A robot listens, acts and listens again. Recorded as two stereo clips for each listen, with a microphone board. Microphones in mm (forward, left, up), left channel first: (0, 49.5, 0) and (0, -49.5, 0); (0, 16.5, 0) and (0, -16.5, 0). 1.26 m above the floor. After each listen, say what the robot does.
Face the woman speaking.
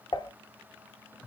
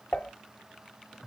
Keep listening.
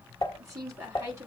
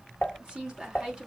Turn 30° right.
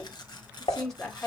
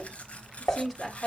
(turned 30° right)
Turn 10° left.
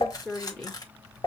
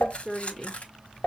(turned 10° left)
Facing the woman speaking.